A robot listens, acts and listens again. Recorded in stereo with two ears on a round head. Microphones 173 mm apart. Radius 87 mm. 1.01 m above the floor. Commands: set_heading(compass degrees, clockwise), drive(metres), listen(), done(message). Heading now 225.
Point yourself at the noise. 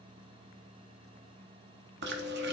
set_heading(285)
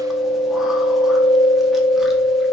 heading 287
done("Facing the chewing.")